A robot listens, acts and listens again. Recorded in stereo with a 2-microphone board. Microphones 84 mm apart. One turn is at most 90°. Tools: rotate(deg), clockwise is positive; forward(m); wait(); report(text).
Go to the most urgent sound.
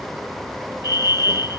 rotate(35)
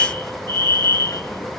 rotate(90)
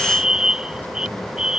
rotate(10)
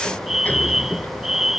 forward(1.0)
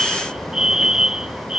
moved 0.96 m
rotate(10)
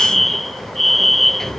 forward(1.0)
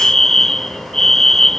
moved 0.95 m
forward(1.0)
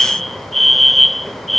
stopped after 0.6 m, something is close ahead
report("Arrived at the fire alarm, straight ahead.")